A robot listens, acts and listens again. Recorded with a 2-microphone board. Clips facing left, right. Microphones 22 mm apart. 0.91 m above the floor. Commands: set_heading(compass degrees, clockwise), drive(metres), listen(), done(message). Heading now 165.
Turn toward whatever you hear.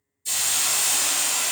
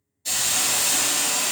set_heading(220)
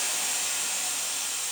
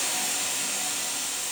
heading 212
set_heading(277)
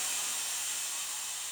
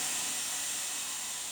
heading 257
set_heading(277)
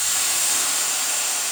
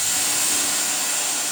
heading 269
done("Facing the hiss, 1 to 2 m away.")